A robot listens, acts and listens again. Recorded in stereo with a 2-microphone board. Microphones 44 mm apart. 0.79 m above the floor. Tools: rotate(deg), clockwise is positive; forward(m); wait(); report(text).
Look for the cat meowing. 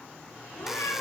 rotate(-70)
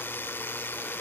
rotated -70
wait()
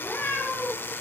rotate(-40)
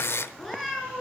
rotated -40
report("Found it: a cat meowing, straight ahead.")